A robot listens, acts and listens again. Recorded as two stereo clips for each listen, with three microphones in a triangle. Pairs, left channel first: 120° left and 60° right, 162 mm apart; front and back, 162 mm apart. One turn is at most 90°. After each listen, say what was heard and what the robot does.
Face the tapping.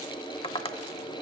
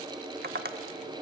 The tapping: 175° left. Turn 90° left.
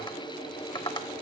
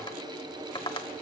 The tapping is now 60° left. Turn 60° left.
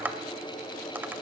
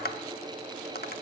The tapping is now 20° left. Turn 20° left.
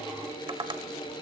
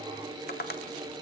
Found it: tapping, straight ahead.